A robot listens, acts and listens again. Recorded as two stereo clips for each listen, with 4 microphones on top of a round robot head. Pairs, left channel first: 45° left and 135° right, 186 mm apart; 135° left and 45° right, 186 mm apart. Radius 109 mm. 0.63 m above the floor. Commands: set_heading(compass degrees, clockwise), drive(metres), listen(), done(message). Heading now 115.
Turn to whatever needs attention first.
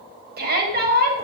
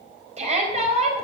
set_heading(215)
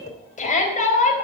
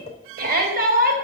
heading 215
done("Facing the shout, over 4 m away.")